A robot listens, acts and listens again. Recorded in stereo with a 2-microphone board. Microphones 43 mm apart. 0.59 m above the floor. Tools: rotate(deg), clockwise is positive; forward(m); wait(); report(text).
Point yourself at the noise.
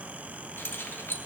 rotate(-60)
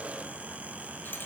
wait()
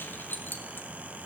rotate(-60)
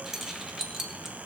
rotate(10)
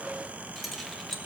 report("Found it: keys jangling, straight ahead.")